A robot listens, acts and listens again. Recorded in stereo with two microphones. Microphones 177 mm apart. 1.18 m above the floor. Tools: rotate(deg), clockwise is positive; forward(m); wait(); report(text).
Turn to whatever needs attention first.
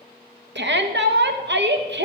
rotate(90)
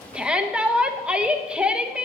report("Found it: a shout, straight ahead.")